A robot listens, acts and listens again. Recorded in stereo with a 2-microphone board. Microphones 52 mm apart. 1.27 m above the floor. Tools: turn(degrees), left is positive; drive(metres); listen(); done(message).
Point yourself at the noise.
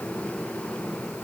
listen()
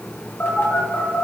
turn(degrees=40)
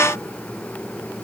listen()
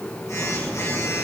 turn(degrees=95)
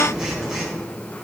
turn(degrees=-10)
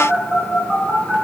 done("Facing the phone buzzing.")